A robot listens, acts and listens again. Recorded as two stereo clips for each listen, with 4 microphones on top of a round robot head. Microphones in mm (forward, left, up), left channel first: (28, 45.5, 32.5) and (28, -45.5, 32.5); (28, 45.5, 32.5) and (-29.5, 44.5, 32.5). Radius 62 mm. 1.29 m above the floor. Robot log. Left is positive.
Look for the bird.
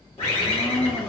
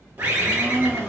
note: The bird: 125° left.
cmd yaw +125
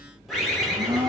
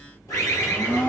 end: Facing the bird.